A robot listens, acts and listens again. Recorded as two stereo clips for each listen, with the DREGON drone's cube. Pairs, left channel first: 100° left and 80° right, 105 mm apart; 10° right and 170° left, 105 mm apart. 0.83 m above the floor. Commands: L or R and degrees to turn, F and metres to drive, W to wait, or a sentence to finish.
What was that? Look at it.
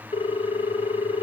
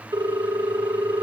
L120
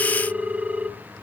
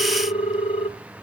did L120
Facing the ringtone, 1 to 2 m away.